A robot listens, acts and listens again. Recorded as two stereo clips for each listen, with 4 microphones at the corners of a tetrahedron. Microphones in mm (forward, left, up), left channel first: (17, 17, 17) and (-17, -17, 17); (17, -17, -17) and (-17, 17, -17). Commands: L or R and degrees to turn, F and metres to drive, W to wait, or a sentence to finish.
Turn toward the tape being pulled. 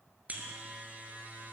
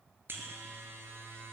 W
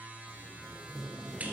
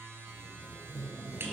R45
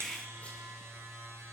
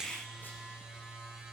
W
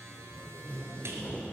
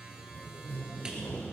R10
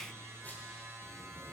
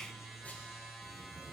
W
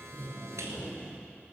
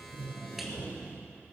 Facing the tape being pulled, 2 to 4 m away.